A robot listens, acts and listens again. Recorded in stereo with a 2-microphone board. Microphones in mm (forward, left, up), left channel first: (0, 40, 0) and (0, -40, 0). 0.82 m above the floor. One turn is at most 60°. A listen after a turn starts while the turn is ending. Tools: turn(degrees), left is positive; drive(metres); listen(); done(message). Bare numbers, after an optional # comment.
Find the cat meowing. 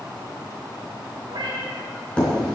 turn(-60)
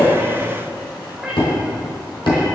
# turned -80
# So it is at 10° right.
turn(-10)
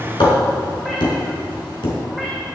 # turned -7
listen()
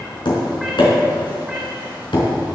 listen()
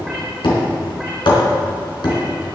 done("Facing where the cat meowing came from. I can't hear it now.")